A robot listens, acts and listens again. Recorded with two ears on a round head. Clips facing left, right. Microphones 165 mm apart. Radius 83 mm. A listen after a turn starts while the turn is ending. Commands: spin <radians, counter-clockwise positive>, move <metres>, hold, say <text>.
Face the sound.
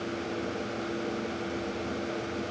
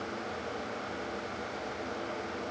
hold
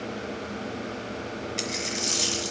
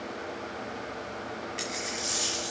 spin 1.05
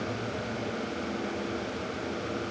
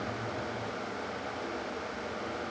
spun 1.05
hold
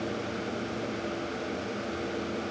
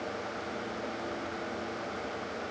say I heard a dropped coin, but can't make it out now. It was about straight ahead or 60° left.